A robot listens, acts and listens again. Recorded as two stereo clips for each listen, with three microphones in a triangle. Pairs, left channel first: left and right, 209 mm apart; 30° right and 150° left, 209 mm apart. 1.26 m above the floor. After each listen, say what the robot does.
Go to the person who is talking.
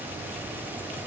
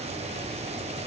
Keep listening.
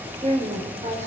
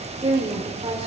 Turn 150° right.
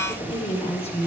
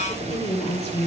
Turn 30° left.
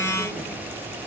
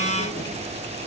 Keep listening.
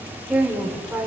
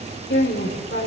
Drive 1.0 m forward.
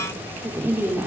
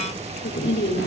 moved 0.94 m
Turn 10° right.
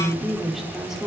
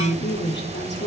Drive 1.0 m forward.
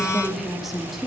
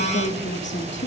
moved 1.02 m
Drive 1.0 m forward.
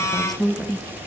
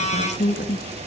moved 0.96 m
Drive 1.0 m forward.
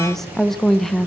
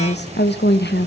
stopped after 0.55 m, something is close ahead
Arrived at the woman speaking, straight ahead.